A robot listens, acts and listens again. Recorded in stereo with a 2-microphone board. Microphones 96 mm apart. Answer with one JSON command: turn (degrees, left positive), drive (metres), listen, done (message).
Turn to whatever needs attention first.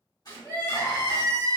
{"turn": 40}
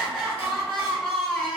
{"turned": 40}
{"done": "Facing the crying, 1 to 2 m away."}